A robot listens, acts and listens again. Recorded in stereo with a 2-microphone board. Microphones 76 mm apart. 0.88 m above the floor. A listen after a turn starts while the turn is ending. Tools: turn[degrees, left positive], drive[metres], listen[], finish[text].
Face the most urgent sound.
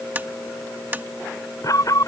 Thought: The alarm: about 50° left or 130° left.
Action: turn[50]
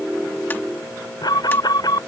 Thought: So it is at 75° left.
Action: turn[75]
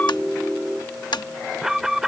Action: finish[Facing the alarm.]